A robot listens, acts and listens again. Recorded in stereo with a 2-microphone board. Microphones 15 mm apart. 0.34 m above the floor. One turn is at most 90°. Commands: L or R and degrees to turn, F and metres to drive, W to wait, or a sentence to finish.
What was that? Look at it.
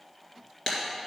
L55
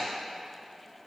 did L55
W
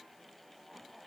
I heard breaking glass, but can't make it out now. It was about straight ahead or 70° left.